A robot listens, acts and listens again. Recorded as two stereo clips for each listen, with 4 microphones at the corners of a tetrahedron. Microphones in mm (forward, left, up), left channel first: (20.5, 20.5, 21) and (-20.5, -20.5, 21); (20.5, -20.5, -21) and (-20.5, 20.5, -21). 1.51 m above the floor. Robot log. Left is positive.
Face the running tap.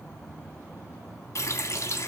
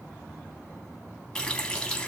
note: The running tap: 25° left.
cmd yaw +25
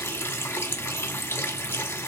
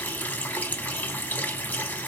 note: The running tap is now 10° left.
cmd yaw +10
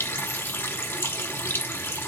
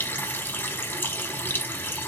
end: Found it: a running tap, straight ahead, under 1 m away.